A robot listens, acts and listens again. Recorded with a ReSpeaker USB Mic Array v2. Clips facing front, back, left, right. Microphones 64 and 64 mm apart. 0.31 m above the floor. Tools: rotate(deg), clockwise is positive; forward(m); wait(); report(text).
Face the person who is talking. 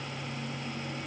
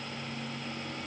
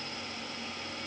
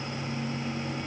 wait()
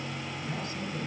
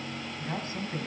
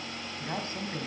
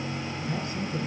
rotate(-130)
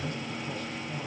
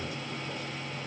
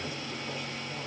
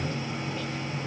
wait()
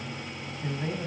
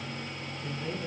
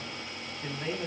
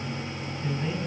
rotate(-15)
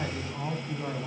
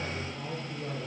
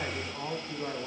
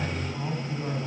report("Found it: a man speaking, straight ahead.")